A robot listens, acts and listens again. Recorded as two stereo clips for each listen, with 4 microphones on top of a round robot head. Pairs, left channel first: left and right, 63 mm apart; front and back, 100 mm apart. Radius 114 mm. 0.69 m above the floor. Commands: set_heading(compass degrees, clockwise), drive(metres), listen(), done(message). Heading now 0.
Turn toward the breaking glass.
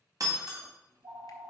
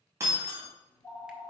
set_heading(115)
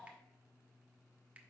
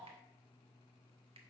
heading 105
set_heading(115)
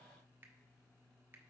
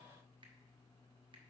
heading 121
done("Facing where the breaking glass came from. I can't hear it now.")